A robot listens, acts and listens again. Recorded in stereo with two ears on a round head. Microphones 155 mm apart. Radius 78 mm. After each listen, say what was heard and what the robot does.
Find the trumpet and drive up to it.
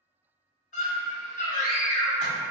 Keep listening.
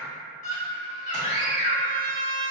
The trumpet: about 40° left or 140° left. Turn 40° left.
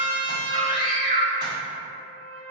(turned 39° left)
So it is at 10° left. Turn 10° left.
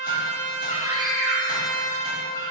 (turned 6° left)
Drive 1.0 m forward.
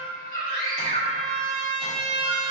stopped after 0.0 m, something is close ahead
Blocked. The trumpet is further on, straight ahead.